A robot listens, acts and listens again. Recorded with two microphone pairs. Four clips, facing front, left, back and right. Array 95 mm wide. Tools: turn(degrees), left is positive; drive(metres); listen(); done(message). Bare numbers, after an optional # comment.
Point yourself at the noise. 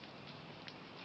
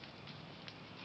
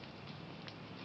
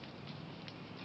listen()
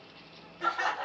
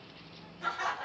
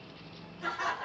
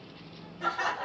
# The laughter: 45° right.
turn(-45)
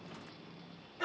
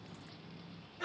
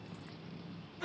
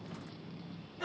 done("Found it: laughter, straight ahead.")